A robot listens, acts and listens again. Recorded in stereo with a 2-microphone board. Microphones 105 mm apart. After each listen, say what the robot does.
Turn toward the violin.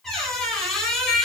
Keep listening.
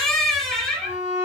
Turn 30° right.
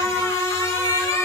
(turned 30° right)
Turn 115° right.
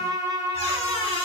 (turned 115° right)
Turn 40° right.
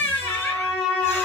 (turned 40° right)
Facing the violin.